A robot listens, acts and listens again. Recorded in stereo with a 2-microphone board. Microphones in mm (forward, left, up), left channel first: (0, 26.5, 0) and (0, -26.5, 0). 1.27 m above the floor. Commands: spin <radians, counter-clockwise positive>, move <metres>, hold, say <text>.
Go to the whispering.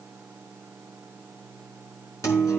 hold
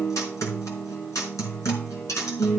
hold
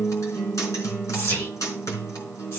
spin 0.96
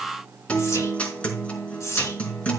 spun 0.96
spin 1.22
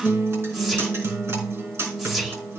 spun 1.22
move 1.0
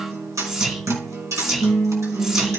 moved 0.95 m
spin -0.26
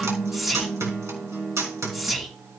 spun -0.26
move 1.0
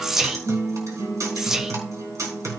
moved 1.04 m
spin -0.17
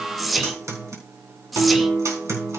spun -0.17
move 1.0
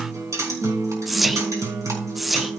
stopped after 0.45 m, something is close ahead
say Arrived at the whispering, straight ahead.